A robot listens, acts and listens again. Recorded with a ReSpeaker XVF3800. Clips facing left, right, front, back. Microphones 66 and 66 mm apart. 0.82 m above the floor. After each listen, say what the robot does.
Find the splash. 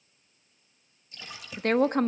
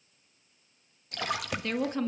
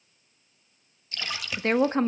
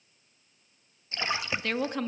Turn 115° right.
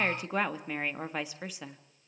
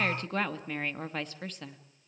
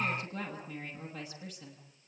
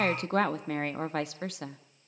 Facing where the splash came from. I can't hear it now.